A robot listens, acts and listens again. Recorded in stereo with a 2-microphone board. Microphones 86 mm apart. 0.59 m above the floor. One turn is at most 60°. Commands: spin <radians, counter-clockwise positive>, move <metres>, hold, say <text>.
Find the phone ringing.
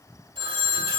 spin -1.05
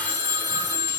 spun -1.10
spin -0.52
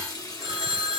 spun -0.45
say Facing the phone ringing, 1 to 2 m away.